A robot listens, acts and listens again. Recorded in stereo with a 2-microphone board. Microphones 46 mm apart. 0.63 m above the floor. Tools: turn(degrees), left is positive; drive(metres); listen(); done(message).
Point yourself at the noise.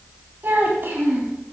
turn(degrees=-50)
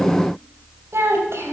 turn(degrees=-70)
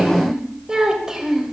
turn(degrees=-10)
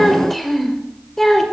turn(degrees=10)
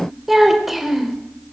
done("Found it: a child speaking, straight ahead.")